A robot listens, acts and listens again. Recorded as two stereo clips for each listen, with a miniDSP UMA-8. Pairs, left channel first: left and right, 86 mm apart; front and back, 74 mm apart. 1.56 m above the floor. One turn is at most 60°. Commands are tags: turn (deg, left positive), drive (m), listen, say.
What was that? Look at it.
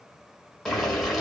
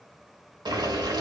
<turn deg="60"/>
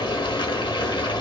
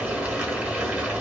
<turn deg="60"/>
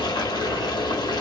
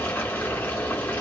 <turn deg="60"/>
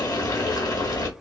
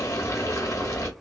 <turn deg="45"/>
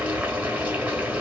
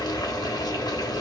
<turn deg="-20"/>
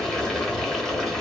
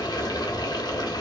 <say>Found it: boiling, straight ahead, under 1 m away.</say>